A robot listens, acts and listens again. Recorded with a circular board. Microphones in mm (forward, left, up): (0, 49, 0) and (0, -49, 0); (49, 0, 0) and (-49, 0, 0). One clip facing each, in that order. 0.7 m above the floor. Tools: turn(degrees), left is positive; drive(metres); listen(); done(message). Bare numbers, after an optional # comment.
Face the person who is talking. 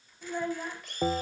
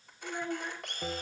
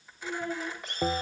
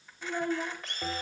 # The child speaking: 135° left.
turn(135)
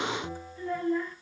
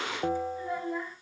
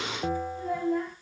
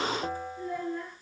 # The child speaking is now 15° right.
turn(-15)
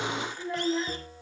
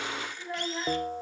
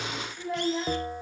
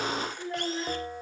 done("Facing the child speaking.")